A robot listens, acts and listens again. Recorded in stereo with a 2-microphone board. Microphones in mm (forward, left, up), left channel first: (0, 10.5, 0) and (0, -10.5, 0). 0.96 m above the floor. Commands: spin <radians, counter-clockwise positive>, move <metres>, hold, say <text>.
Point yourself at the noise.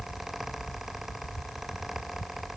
hold
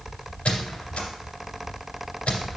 spin 1.13
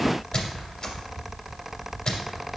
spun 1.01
spin 0.52
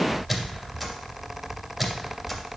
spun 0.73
spin -0.17
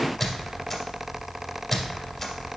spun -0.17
say Found it: a squeak, straight ahead.